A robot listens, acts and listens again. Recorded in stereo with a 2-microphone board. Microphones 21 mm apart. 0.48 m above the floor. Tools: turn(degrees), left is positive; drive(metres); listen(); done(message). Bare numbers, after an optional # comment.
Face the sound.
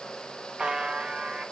# The buzzer: about 50° right or 130° right.
turn(-50)
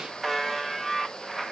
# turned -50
done("Facing the buzzer, 1 to 2 m away.")